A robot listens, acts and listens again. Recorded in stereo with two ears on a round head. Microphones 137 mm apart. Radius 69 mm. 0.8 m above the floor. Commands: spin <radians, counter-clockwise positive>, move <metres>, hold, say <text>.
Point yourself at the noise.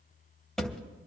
spin 0.52
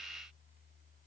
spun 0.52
hold
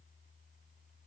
say I heard a thud, but can't make it out now. It was about 25° right or 145° left.